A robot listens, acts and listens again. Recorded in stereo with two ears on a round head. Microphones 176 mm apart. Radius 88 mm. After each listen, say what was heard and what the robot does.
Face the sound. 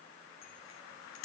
The bicycle bell: about 75° left or 105° left. Turn 75° left.
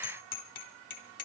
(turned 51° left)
So it is at 50° left. Turn 50° left.
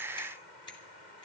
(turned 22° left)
The bicycle bell is now 25° left. Turn 25° left.
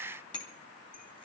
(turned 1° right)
The bicycle bell is now 25° left. Turn 25° left.
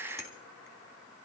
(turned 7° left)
The bicycle bell is now 20° left. Turn 20° left.
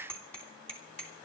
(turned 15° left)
Facing the bicycle bell.